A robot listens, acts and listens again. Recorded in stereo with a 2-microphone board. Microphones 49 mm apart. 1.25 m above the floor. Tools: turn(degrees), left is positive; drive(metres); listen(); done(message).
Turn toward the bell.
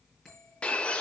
turn(degrees=30)
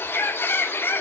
listen()
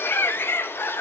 listen()
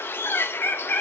done("I heard a bell, but can't make it out now. It was about 20° right or 140° left.")